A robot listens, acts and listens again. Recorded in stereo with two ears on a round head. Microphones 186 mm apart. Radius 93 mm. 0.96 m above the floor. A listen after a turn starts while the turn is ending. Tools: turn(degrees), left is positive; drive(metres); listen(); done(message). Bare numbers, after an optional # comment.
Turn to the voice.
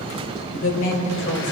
# The woman speaking: about 65° left or 115° left.
turn(65)
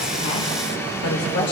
# So it is at 60° left.
turn(60)
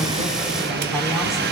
listen()
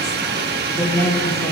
# The woman speaking is now 10° left.
turn(10)
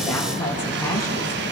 # The woman speaking is now 15° left.
turn(15)
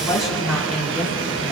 done("Facing the woman speaking.")